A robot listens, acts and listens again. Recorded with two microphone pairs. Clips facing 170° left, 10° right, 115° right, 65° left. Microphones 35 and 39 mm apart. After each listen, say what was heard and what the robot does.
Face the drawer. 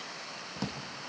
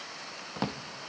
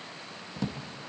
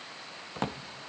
The drawer: 40° left. Turn 40° left.
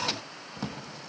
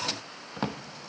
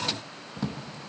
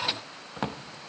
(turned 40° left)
The drawer is now 35° left. Turn 35° left.
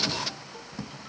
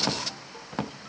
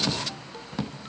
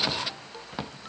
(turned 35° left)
Found it: a drawer, straight ahead.